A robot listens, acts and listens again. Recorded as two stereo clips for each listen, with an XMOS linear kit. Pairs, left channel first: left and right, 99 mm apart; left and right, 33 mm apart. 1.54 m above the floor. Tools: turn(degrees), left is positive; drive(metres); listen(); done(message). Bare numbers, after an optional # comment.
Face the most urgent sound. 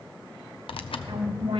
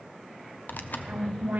# The alarm: about 60° right or 120° right.
turn(-60)
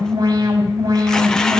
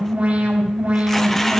# So it is at 55° right.
turn(-55)
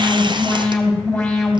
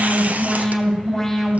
done("Facing the alarm.")